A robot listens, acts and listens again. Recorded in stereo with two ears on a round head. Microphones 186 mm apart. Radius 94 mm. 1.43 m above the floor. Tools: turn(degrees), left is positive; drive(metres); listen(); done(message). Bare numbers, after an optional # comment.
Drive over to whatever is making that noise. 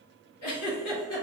turn(90)
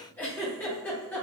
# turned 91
# So it is at 10° left.
turn(10)
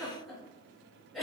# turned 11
drive(1.0)
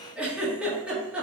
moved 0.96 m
drive(1.0)
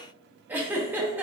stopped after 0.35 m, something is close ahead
# The giggle is now 10° right.
turn(-10)
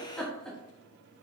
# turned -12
done("Arrived at the giggle, straight ahead.")